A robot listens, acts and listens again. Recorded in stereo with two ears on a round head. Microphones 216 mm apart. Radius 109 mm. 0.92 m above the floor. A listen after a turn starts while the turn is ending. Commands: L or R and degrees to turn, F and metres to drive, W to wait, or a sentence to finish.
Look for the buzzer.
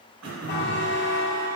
L45
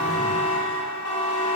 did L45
L85
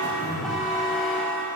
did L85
Found it: a buzzer, straight ahead, 1 to 2 m away.